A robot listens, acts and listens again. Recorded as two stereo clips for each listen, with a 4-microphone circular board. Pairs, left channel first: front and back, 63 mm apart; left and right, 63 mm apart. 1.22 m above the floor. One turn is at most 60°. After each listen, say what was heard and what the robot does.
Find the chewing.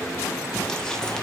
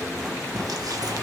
Keep listening.
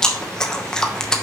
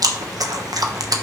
The chewing: 80° right. Turn 60° right.
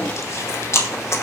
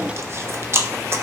The chewing is now 45° right. Turn 45° right.
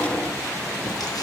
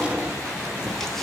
Keep listening.
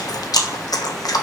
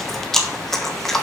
Facing the chewing, 1 to 2 m away.